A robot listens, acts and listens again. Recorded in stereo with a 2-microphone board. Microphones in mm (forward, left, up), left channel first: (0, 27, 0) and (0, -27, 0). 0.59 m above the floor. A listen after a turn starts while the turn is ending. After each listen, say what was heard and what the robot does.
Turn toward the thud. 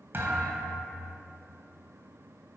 The thud: about 50° right or 130° right. Turn 50° right.
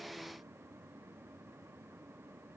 Keep listening.
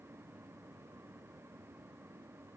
I heard a thud, but can't make it out now. It was about straight ahead or 80° right.